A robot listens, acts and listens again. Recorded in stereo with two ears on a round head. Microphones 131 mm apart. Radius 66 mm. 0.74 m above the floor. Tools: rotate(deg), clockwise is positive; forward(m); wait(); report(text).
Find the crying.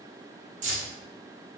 wait()
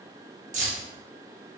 wait()
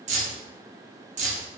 report("I can't make out crying, only keys jangling.")